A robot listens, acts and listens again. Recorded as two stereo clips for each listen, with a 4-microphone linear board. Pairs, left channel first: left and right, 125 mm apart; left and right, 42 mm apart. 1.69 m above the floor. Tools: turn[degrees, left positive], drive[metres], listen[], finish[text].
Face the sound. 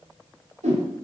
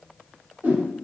Thought: The whoosh: about 70° right or 110° right.
Action: turn[-70]
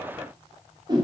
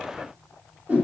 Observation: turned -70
Thought: So it is at 35° right.
Action: turn[-35]
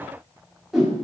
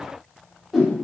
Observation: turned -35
Action: finish[Found it: a whoosh, straight ahead, 2 to 4 m away.]